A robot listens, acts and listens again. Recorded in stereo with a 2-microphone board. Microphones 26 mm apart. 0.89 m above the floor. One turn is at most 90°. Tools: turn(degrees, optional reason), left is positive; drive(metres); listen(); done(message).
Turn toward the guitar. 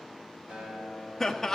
turn(degrees=-55, reason="The guitar: about 55° right or 125° right.")
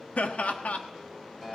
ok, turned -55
done("Facing the guitar.")